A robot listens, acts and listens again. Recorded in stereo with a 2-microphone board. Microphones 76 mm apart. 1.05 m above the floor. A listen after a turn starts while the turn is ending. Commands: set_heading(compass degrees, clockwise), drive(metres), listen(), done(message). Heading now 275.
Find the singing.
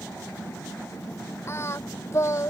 set_heading(235)
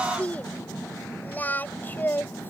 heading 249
set_heading(224)
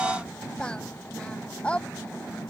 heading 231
set_heading(221)
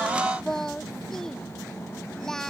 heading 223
done("Found it: singing, straight ahead.")